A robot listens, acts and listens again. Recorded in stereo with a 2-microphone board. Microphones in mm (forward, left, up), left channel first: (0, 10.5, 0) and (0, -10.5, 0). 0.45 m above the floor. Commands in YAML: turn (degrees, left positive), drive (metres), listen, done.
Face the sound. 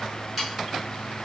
turn: -30
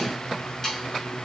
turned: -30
turn: 20
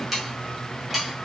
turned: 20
done: "Found it: sawing, straight ahead."